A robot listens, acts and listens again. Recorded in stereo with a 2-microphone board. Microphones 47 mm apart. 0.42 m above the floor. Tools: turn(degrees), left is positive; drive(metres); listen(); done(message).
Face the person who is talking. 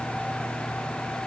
listen()
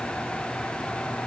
listen()
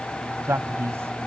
turn(degrees=-65)
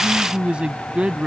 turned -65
turn(degrees=-25)
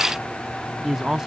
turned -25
turn(degrees=-10)
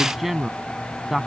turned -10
done("Facing the man speaking.")